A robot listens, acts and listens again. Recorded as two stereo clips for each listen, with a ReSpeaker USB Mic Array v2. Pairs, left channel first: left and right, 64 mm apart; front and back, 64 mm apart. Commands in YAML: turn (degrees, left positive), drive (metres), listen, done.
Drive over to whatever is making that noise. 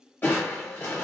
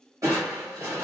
turn: 150
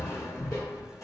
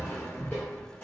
turn: 65
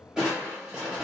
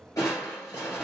turn: -10
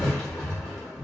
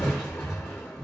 drive: 1.0
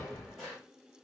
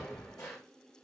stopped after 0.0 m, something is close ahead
done: "Something is in my way. I am facing the crushing but have not reached it."